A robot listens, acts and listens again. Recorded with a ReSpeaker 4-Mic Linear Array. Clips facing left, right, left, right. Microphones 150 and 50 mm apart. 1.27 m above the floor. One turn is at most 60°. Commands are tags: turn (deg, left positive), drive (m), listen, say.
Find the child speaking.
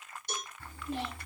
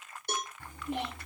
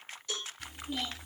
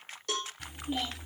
<turn deg="-20"/>
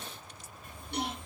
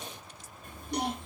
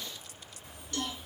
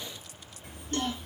<turn deg="-60"/>
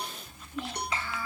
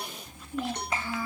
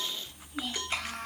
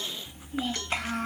<turn deg="-45"/>
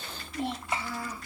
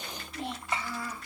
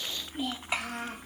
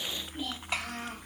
<turn deg="10"/>
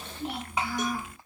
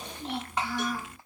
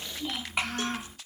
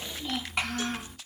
<say>Facing the child speaking.</say>